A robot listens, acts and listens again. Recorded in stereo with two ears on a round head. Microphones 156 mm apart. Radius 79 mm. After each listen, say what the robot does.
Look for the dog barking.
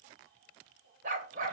Turn 50° right.
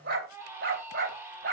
Turn 60° right.
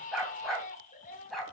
Found it: a dog barking, straight ahead.